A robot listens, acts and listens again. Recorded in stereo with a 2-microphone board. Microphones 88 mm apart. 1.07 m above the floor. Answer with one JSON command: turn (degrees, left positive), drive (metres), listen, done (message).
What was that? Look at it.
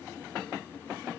{"listen": true}
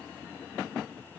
{"listen": true}
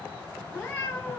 {"turn": 25}
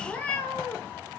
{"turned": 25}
{"turn": 25}
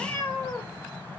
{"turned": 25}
{"turn": 30}
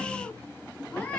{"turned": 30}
{"turn": 15}
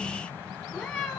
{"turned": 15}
{"done": "Found it: a cat meowing, straight ahead."}